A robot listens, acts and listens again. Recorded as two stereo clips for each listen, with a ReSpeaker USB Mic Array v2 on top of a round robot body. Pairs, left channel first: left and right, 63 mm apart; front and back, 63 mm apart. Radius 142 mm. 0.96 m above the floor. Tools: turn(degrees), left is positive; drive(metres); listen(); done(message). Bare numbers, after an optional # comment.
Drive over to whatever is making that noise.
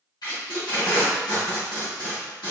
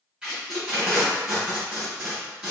# The tape being pulled: 105° left.
turn(105)
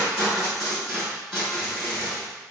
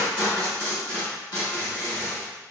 drive(1.0)
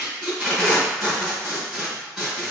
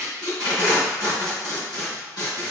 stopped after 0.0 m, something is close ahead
done("Blocked. The tape being pulled is further on, straight ahead.")